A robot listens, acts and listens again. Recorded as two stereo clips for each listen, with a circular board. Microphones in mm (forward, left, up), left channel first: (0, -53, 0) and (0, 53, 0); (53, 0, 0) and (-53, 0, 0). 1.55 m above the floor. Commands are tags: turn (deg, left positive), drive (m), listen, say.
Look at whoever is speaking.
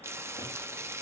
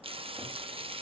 <listen/>
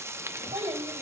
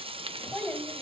<turn deg="85"/>
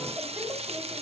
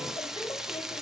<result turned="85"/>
<turn deg="25"/>
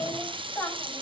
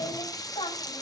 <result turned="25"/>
<turn deg="-15"/>
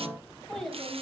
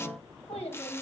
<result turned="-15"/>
<say>Found it: a child speaking, straight ahead.</say>